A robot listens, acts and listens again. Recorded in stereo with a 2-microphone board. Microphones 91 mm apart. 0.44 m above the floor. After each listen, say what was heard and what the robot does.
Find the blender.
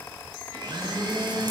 The blender: about 55° right or 125° right. Turn 55° right.
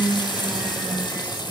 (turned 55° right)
Found it: a blender, straight ahead, 2 to 4 m away.